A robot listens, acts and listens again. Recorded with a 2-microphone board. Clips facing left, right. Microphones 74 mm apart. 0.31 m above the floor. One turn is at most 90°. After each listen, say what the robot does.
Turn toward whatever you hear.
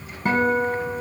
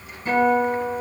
Turn 65° left.
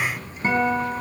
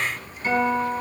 Turn 40° left.
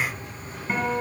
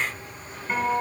Facing the guitar.